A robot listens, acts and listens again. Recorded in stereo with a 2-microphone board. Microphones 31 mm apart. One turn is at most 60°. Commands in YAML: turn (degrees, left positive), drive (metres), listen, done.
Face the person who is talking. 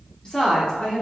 turn: 25
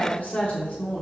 turn: 60
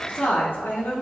turn: 60
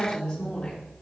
turn: 20
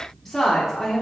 done: "Facing the woman speaking."